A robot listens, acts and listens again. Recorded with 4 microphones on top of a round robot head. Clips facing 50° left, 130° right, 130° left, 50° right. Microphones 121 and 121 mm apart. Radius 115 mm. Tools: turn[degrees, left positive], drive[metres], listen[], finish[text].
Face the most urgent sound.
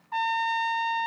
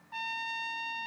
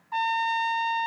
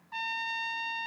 Action: listen[]
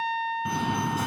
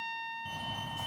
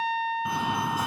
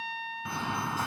Thought: The fire alarm: 50° left.
Action: turn[50]
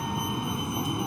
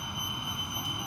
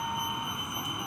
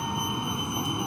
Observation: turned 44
Thought: The fire alarm is now 10° left.
Action: turn[10]
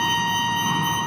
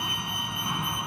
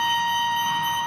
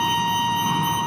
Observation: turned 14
Action: finish[Facing the fire alarm.]